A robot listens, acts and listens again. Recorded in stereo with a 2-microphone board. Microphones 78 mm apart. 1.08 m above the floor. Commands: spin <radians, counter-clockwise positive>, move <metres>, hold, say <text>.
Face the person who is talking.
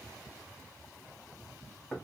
hold
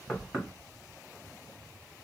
hold
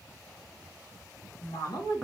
spin 1.05
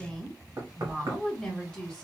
spin 0.17
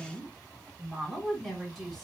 say Found it: a woman speaking, straight ahead, 1 to 2 m away.